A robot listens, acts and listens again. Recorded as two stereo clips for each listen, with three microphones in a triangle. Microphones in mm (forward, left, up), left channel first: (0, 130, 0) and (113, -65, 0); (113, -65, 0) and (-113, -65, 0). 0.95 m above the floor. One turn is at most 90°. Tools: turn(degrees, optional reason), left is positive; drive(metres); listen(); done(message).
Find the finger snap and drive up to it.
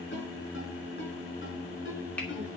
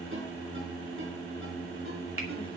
turn(degrees=-90, reason="The finger snap: 155° right.")
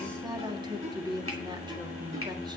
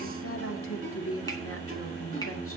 turn(degrees=-65, reason="Nothing new. It was at 65° right.")
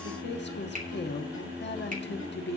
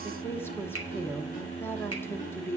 listen()
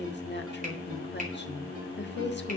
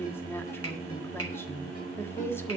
done("I heard a finger snap from this way, but can't make it out now. I did not reach it.")